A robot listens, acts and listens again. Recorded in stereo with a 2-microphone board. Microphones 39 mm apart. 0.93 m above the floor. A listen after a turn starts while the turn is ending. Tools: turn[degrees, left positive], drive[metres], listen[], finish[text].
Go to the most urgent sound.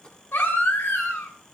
Thought: The baby crying: about 75° left or 105° left.
Action: turn[75]
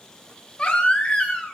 Thought: So it is at 30° left.
Action: turn[30]
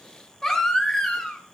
Thought: The baby crying is now 10° left.
Action: turn[10]
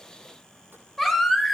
Action: drive[1.0]
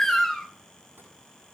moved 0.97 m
Thought: The baby crying is now 10° left.
Action: turn[10]
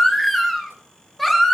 Action: drive[1.0]
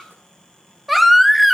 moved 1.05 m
Action: drive[1.0]
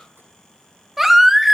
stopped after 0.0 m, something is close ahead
Action: finish[I am next to the baby crying.]